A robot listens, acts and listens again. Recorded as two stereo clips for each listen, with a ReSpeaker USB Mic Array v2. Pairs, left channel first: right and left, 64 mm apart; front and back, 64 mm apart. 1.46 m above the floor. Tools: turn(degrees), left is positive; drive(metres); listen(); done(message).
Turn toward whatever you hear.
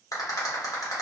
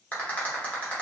turn(degrees=-70)
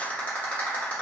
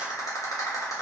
turn(degrees=-25)
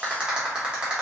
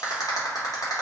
turn(degrees=15)
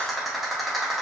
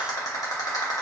done("Found it: a rattle, straight ahead, under 1 m away.")